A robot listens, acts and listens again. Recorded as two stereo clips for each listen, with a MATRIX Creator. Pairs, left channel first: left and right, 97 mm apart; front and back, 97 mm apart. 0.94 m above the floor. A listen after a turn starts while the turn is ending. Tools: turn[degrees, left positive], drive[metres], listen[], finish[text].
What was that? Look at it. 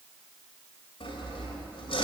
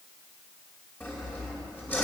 Thought: The sawing: 70° left.
Action: turn[70]
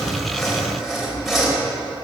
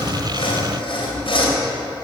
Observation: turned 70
Action: finish[Facing the sawing.]